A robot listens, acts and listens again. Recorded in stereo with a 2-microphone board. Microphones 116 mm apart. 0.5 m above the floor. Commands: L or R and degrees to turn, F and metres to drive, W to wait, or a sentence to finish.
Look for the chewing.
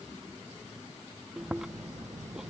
R30
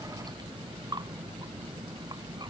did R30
R145
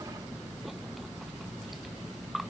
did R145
Facing the chewing.